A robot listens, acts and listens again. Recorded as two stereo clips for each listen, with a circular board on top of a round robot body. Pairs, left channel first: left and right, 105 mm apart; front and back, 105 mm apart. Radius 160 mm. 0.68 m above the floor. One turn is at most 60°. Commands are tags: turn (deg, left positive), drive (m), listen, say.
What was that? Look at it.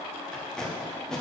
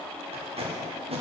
<turn deg="60"/>
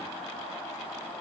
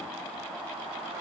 <turn deg="60"/>
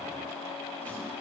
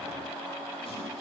<turn deg="55"/>
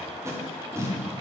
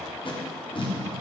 <turn deg="-30"/>
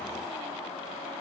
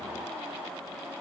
<listen/>
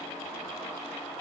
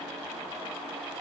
<listen/>
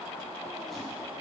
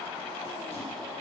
<say>I heard tape being pulled from this way, but can't make it out now.</say>